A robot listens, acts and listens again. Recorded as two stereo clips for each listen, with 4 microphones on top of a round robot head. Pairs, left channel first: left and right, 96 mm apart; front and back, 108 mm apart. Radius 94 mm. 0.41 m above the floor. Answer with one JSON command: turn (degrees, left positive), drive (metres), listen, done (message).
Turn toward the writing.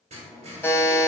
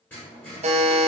{"turn": -80}
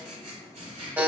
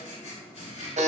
{"turn": -40}
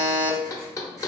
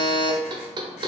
{"listen": true}
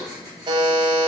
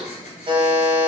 {"turn": -10}
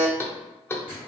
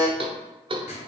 {"done": "Facing the writing, 1 to 2 m away."}